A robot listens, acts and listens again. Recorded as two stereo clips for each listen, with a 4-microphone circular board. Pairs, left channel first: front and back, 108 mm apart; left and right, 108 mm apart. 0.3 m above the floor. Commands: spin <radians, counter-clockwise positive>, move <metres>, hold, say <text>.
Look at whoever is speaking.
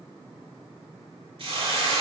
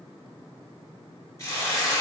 hold
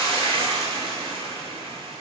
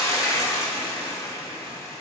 hold
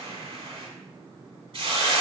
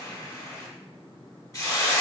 say I can't make out anyone speaking to turn to.